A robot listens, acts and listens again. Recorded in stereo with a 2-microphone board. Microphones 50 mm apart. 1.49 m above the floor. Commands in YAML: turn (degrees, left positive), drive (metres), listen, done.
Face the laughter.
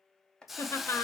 turn: 90
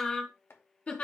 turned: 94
turn: 30
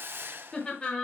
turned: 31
turn: 25
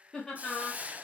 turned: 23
turn: 15
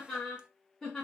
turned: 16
turn: 10
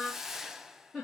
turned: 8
done: "Found it: laughter, straight ahead, 2 to 4 m away."